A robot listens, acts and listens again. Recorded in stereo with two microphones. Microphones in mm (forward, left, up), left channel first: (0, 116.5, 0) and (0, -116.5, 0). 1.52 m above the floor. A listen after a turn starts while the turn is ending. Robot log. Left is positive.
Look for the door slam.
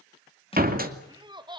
note: The door slam: about 40° right or 140° right.
cmd yaw -40
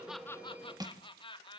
cmd idle
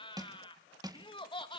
end: I heard a door slam, but can't make it out now. It was about straight ahead or 100° right.